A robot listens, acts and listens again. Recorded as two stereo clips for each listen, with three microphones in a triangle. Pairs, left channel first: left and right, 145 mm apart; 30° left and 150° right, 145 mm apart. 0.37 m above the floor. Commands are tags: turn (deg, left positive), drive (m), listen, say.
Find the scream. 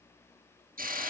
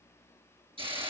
<listen/>
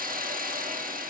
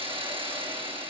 <listen/>
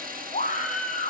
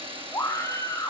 <turn deg="95"/>
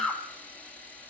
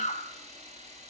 <say>Found it: a scream, straight ahead.</say>